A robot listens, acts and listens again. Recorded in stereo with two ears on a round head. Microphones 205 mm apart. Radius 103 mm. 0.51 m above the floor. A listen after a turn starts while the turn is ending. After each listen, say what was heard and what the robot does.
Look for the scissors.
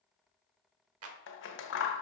The scissors: about 55° left or 125° left. Turn 55° left.
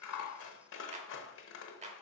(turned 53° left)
So it is at 65° left. Turn 65° left.
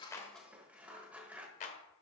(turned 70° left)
Facing the scissors, 1 to 2 m away.